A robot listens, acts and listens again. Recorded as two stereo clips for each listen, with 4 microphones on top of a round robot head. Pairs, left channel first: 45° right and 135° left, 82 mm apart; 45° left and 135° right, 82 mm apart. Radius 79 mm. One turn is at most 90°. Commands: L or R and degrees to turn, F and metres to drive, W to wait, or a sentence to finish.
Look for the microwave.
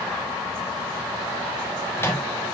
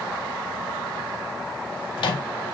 L15
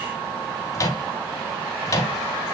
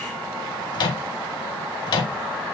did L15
Facing the microwave.